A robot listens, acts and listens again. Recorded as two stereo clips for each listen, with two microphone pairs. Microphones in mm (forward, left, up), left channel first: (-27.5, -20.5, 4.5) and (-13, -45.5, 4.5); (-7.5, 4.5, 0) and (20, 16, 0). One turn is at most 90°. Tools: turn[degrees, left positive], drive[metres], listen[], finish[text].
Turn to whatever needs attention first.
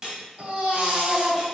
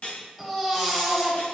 Thought: The baby crying: 70° right.
Action: turn[-70]
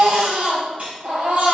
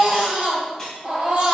Thought: The baby crying is now 30° right.
Action: turn[-30]
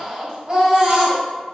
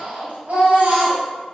Action: finish[Found it: a baby crying, straight ahead.]